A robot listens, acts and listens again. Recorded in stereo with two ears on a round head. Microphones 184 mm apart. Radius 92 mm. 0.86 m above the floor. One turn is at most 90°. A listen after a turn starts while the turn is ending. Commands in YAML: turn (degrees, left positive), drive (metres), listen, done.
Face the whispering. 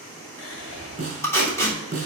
turn: 90
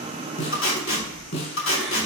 done: "Facing the whispering, 2 to 4 m away."